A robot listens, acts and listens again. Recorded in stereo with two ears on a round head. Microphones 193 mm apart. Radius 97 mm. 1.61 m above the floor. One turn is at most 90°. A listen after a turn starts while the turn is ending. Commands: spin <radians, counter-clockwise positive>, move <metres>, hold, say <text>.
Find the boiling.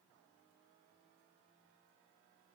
hold
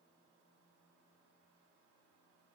hold
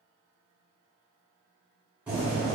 spin -0.52
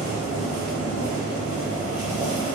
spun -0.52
spin 0.35
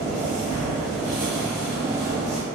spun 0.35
say Found it: boiling, straight ahead.